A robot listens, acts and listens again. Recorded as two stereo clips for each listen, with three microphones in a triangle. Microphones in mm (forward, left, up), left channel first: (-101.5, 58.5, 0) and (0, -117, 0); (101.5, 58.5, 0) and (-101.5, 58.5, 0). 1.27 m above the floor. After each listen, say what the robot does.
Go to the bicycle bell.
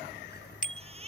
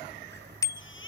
Turn 75° left.
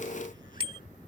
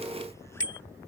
Drive 1.0 m forward.
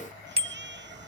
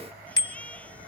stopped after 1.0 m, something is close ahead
I am next to the bicycle bell.